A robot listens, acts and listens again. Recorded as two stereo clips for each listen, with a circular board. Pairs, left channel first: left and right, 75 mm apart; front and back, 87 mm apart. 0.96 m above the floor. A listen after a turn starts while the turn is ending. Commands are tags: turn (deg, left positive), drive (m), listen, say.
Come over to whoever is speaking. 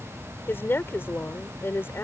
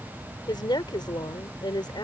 <turn deg="30"/>
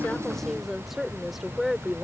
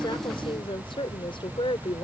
<drive m="1.0"/>
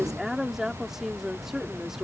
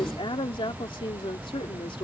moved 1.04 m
<drive m="1.0"/>
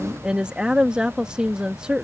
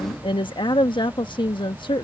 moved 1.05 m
<turn deg="-10"/>
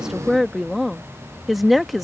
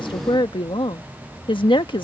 <drive m="1.0"/>
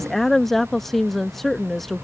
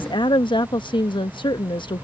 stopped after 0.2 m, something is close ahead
<say>Arrived at the woman speaking, straight ahead.</say>